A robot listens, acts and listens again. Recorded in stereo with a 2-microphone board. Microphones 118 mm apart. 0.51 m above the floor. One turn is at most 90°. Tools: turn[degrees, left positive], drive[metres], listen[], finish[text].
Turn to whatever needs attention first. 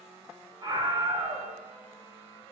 Thought: The scream: about 35° right or 145° right.
Action: turn[-35]
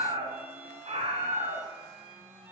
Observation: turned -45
Thought: So it is at 90° right.
Action: turn[-90]
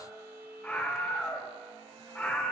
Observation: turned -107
Thought: The scream is now 20° left.
Action: turn[20]
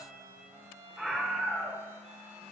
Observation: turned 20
Action: finish[Found it: a scream, straight ahead, 1 to 2 m away.]